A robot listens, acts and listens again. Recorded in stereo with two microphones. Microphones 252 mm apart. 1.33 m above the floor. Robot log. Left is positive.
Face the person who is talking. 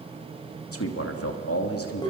note: The man speaking: about 65° left or 115° left.
cmd yaw +65
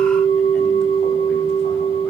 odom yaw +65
cmd idle
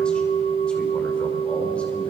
cmd idle
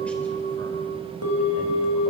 end: I heard a man speaking, but can't make it out now. It was about straight ahead or 50° left.